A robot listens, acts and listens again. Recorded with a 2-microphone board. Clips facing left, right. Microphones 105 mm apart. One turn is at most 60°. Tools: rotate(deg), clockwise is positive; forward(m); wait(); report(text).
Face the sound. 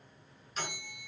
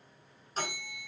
rotate(40)
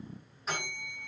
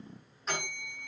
report("Found it: a bell, straight ahead.")